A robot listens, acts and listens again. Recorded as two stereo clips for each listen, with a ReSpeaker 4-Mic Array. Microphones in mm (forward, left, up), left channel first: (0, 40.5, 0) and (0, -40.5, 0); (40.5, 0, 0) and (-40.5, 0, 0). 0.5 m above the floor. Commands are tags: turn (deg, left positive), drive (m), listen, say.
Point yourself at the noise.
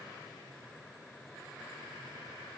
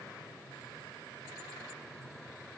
<listen/>
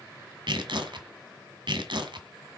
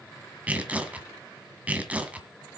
<turn deg="-105"/>
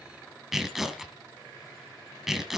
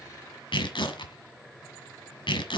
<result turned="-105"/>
<say>Found it: tearing paper, straight ahead.</say>